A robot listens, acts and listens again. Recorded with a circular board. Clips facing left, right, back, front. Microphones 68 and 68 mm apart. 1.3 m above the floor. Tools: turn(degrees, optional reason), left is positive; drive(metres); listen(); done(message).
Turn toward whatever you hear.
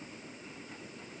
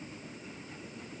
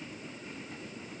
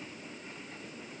listen()
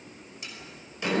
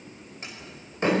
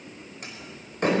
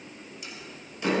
turn(degrees=-140, reason="The door slam: 140° right.")
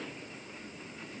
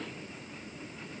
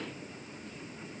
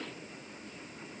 done("Facing where the door slam came from. I can't hear it now.")